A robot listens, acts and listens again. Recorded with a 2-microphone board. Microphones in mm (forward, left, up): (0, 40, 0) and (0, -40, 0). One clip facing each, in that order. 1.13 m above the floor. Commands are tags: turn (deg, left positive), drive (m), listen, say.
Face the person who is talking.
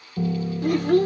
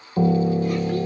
<turn deg="60"/>
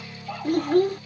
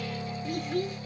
<turn deg="55"/>
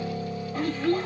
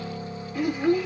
<turn deg="-15"/>
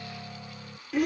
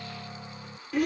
<say>Facing the child speaking.</say>